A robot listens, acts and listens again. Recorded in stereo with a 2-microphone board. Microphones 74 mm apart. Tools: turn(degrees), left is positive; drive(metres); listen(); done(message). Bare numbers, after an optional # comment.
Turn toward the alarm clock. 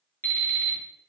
# The alarm clock: about 35° left or 145° left.
turn(35)
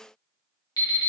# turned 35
# So it is at 100° left.
turn(100)
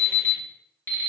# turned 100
# The alarm clock is now 30° left.
turn(30)
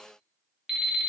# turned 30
done("Facing the alarm clock.")